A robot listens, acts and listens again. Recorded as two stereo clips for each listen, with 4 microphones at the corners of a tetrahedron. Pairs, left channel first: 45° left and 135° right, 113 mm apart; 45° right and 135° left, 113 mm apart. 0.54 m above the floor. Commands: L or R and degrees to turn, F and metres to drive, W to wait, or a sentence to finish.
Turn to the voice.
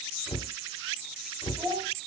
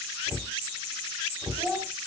R160
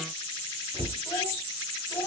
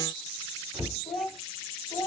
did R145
R15
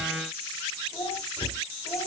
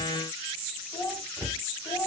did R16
Found it: a child speaking, straight ahead.